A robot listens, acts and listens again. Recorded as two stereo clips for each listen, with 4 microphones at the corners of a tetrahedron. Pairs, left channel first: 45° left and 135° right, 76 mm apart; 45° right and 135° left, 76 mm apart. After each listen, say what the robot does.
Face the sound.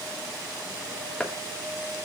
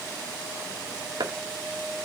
Turn 125° left.
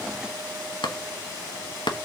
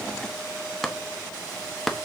Turn 40° left.
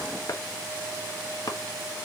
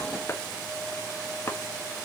Found it: chopping, straight ahead, 1 to 2 m away.